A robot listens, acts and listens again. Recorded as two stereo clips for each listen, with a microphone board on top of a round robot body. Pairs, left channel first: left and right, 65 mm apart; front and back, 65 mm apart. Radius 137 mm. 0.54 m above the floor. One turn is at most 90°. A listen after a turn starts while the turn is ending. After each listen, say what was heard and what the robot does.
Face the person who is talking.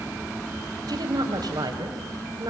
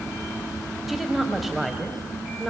The woman speaking: 90° right. Turn 90° right.
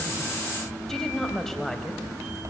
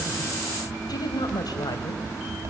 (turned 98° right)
Found it: a woman speaking, straight ahead, over 4 m away.